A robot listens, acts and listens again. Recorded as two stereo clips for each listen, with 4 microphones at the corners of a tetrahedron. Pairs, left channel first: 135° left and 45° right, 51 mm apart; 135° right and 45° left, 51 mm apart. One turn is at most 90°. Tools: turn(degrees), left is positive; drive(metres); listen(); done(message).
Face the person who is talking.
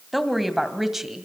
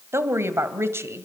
turn(degrees=35)
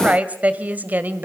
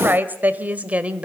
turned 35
turn(degrees=-10)
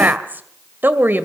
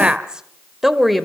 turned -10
turn(degrees=-50)
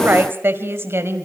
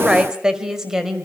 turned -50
turn(degrees=-35)
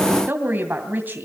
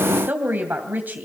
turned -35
done("Found it: a woman speaking, straight ahead.")